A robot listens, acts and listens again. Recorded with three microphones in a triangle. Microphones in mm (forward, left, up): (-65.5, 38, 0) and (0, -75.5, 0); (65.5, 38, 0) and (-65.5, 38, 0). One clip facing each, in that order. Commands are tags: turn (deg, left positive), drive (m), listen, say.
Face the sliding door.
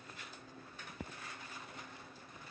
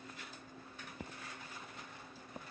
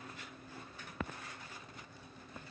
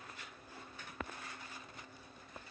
<listen/>
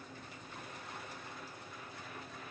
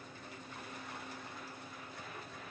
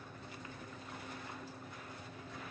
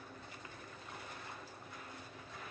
<listen/>
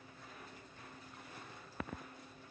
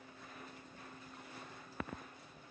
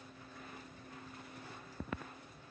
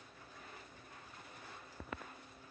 <say>I can't make out a sliding door.</say>